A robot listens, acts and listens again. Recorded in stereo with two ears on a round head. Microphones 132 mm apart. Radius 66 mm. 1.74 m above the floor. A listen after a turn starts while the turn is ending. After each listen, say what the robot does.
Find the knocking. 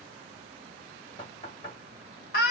Turn 40° left.
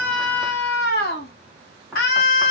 Facing the knocking.